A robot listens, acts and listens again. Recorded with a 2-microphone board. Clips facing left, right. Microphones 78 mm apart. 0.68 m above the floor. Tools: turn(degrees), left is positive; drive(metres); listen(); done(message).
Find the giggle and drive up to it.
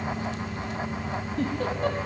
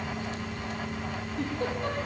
turn(degrees=60)
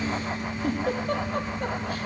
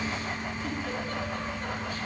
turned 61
turn(degrees=60)
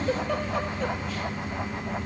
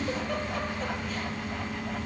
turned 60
drive(metres=1.0)
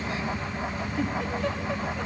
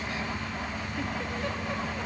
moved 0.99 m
drive(metres=1.0)
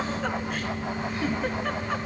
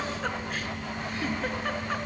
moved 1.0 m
drive(metres=1.0)
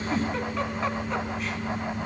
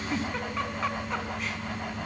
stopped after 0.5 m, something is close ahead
done("Arrived at the giggle, straight ahead.")